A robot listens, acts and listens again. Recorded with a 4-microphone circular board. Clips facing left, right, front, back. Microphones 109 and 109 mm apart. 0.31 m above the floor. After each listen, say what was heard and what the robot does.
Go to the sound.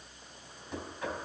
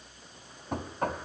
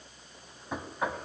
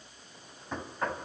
The knocking: 80° right. Turn 80° right.
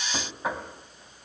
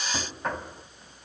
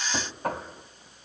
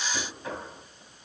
The knocking is now 10° left. Turn 10° left.
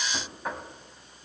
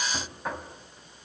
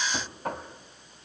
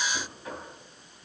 Drive 1.0 m forward.
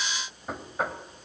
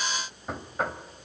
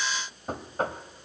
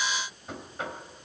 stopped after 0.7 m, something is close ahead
Arrived at the knocking, straight ahead.